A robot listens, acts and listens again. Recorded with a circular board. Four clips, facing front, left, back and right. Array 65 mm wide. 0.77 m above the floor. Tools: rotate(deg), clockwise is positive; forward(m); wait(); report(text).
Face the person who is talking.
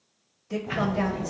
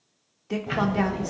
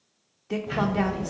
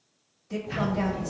rotate(-130)
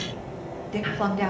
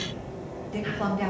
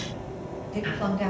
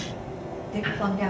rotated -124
report("Facing the woman speaking, 1 to 2 m away.")